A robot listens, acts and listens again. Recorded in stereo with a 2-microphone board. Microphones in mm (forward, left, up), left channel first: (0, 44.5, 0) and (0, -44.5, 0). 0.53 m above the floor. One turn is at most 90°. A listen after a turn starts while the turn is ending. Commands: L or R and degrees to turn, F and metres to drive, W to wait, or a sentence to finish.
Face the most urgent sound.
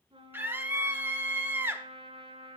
R25
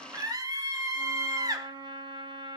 R90
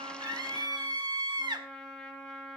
R65
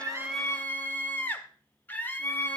L25
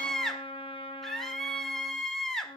Found it: a scream, straight ahead.